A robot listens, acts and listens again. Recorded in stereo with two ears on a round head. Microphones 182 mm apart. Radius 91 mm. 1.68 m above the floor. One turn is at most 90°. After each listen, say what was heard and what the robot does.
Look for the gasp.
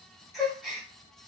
Turn 30° left.
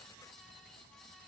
Keep listening.
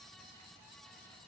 I heard a gasp, but can't make it out now. It was about 30° right or 150° left.